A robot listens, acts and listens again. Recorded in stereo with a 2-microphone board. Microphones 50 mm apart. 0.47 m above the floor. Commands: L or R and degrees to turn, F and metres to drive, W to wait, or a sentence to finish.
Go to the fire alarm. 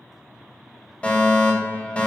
L20
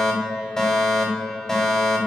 L10
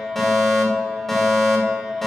F1.0
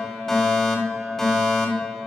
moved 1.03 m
F1.0
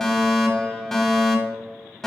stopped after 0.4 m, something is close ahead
L10
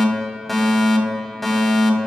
I am next to the fire alarm.